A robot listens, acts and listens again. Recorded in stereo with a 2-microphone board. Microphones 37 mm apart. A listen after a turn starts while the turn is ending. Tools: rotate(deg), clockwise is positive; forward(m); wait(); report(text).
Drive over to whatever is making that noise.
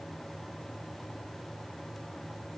wait()
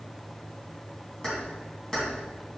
rotate(-15)
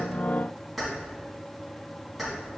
forward(1.0)
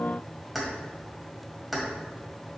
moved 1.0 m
forward(1.0)
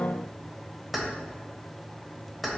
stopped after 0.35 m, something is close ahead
report("Arrived at the keys jangling, straight ahead.")